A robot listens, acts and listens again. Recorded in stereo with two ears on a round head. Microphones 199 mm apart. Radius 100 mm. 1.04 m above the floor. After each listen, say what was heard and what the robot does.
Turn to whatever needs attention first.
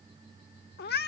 Keep listening.
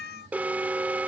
Turn 30° right.
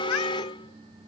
So it is at 25° left. Turn 25° left.
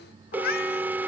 The alarm is now 10° right. Turn 10° right.
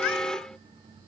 Found it: an alarm, straight ahead.